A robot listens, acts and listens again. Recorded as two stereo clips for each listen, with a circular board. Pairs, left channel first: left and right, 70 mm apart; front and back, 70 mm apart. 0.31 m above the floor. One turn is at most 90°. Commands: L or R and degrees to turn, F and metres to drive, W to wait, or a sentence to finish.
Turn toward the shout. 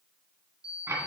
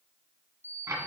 W
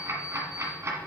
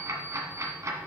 W
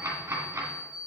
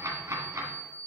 I can't make out a shout, only ticking and an alarm clock.